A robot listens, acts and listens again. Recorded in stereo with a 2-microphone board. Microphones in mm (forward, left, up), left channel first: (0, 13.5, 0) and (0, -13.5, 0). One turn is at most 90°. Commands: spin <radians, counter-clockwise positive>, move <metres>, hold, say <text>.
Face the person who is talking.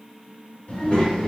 spin 0.87
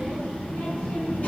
spin 1.40
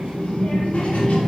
spin 1.05
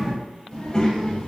spin 0.52
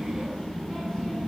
say Found it: a child speaking, straight ahead.